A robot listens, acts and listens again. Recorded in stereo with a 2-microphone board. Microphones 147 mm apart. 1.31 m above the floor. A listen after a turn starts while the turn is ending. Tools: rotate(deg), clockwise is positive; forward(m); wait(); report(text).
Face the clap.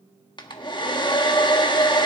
wait()
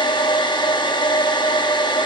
wait()
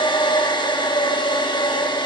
report("I can't make out a clap to turn to.")